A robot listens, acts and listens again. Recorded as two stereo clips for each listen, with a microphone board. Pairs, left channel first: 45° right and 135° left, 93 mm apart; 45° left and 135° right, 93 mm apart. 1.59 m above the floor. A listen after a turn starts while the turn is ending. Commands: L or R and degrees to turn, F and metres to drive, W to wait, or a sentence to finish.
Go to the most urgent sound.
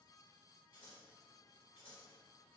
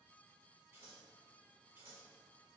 W
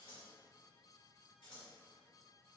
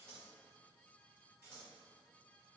W
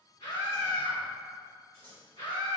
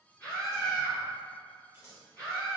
R20
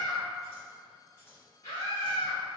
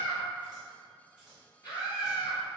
F1.0
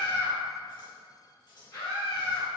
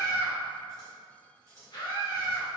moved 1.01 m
F1.0
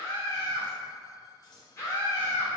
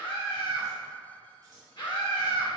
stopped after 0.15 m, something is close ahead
L15
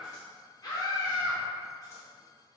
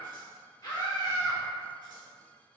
I am next to the scream.